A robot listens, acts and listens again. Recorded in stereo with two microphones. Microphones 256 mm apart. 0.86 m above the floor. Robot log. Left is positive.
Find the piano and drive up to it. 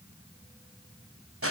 cmd idle
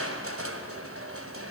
cmd idle
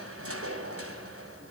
end: I can't make out a piano, only crushing.